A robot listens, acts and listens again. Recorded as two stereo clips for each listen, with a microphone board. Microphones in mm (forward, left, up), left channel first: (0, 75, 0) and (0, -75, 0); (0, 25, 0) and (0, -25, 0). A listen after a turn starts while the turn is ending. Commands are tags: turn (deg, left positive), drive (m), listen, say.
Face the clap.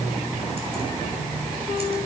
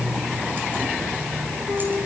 <listen/>
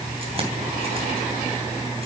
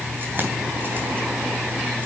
<listen/>
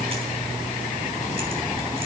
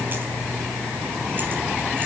<say>I can't make out a clap.</say>